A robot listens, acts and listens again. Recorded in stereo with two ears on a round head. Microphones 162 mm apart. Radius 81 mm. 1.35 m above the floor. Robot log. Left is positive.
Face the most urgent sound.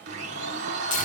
cmd idle
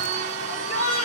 note: The shout: about 40° left or 140° left.
cmd yaw +40
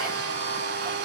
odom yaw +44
cmd idle
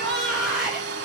end: Found it: a shout, straight ahead.